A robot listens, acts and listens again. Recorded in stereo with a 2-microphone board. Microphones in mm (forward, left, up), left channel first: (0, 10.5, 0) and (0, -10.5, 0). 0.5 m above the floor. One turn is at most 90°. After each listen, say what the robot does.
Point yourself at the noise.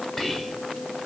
Turn 20° left.
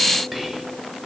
Facing the whispering.